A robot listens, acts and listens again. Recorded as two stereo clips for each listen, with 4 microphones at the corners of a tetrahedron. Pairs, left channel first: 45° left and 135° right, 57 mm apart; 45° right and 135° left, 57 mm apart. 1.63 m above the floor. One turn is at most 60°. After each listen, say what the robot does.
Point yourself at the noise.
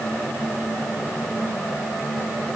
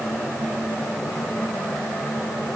Keep listening.
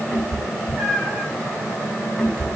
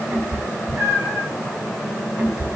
Turn 60° left.
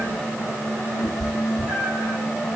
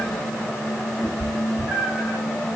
Turn 50° left.
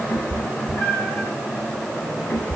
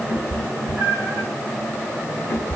Found it: a cat meowing, straight ahead.